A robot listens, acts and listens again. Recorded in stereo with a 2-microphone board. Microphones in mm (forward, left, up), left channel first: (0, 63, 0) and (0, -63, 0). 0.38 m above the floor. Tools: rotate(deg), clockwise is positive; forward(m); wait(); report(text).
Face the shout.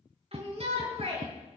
rotate(55)
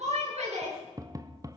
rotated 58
rotate(65)
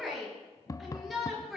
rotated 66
report("Facing the shout, over 4 m away.")